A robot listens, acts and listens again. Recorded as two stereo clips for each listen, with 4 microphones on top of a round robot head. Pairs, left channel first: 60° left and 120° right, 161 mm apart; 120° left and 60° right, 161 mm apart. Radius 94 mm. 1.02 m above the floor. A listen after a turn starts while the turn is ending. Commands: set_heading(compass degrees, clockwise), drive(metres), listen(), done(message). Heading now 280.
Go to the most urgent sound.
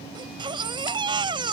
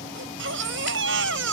set_heading(340)
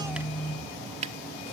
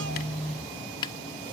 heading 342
listen()
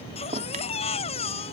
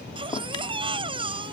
drive(1.0)
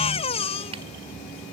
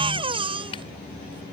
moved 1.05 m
drive(1.0)
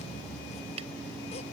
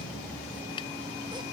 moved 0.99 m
listen()
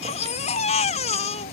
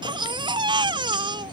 drive(1.0)
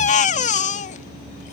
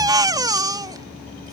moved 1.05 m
set_heading(332)
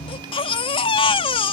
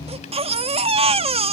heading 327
drive(1.0)
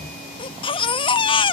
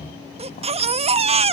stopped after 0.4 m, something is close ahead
done("Arrived at the baby crying, straight ahead.")